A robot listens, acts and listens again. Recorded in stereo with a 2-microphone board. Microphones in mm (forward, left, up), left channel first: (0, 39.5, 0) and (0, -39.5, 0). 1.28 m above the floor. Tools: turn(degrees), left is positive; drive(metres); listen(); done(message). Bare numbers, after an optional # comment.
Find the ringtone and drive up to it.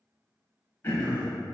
listen()
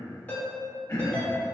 # The ringtone: about 20° left or 160° left.
turn(20)
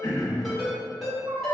drive(1.0)
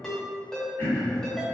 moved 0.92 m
drive(1.0)
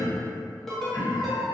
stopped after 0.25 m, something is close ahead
listen()
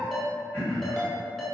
done("I am next to the ringtone.")